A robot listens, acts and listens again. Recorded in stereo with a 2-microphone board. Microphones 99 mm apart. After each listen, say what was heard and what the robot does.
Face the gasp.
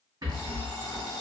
Keep listening.
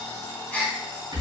Turn 30° left.
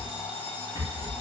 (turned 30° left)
Keep listening.
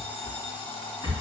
I heard a gasp, but can't make it out now. It was about 15° right or 135° left.